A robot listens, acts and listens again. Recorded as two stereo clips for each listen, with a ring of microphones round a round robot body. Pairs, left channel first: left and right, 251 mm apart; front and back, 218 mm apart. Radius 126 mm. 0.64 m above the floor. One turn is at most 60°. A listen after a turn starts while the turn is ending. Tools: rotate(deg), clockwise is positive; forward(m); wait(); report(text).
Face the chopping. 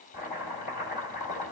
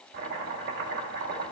rotate(-60)
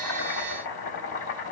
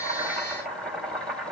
rotate(-60)
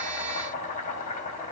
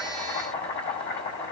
rotate(-30)
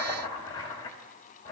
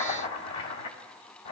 rotate(-15)
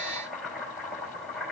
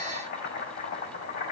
report("Found it: chopping, straight ahead.")